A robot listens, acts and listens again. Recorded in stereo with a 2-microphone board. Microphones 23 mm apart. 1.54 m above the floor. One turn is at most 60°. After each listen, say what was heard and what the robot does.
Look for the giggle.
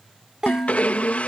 The giggle: about 30° right or 150° right. Turn 30° right.
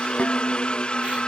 Keep listening.
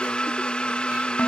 Keep listening.
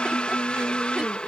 I heard a giggle, but can't make it out now. It was about straight ahead or 120° right.